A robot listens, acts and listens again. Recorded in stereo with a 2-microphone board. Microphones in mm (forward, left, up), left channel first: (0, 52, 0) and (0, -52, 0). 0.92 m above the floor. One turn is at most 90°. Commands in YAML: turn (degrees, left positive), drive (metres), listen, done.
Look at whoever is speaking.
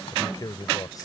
turn: 35
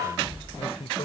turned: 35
turn: 90
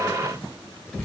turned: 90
turn: 15
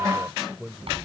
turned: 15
done: "Found it: a man speaking, straight ahead."